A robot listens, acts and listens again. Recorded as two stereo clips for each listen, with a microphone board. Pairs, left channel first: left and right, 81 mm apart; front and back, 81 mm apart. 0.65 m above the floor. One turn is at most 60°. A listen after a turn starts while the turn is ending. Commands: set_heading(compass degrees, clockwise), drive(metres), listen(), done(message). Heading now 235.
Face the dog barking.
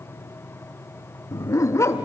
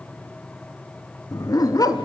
set_heading(200)
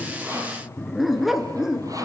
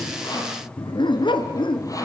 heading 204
done("Facing the dog barking.")